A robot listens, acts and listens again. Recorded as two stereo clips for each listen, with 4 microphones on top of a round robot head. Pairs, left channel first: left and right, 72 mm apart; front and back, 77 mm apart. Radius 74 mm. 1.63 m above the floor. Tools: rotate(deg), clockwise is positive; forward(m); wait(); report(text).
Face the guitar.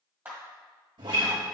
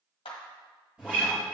rotate(100)
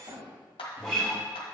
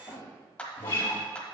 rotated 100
report("Facing the guitar.")